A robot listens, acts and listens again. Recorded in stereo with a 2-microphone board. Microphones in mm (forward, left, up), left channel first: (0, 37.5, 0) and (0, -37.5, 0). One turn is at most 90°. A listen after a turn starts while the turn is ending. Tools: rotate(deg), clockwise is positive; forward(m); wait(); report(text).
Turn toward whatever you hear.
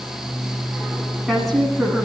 rotate(-30)
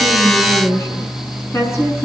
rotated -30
rotate(-90)
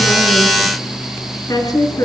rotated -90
rotate(-55)
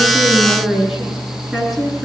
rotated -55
report("Found it: a woman speaking, straight ahead.")